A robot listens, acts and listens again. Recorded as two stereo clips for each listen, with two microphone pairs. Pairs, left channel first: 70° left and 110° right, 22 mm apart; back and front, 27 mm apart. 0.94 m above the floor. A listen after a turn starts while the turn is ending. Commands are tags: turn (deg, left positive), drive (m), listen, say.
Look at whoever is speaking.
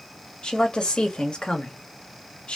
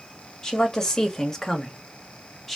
<turn deg="95"/>
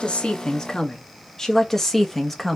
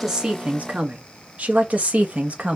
<turn deg="-10"/>
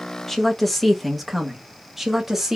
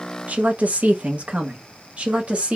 <turn deg="-35"/>
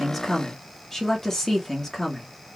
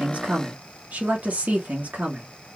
<say>Found it: a woman speaking, straight ahead.</say>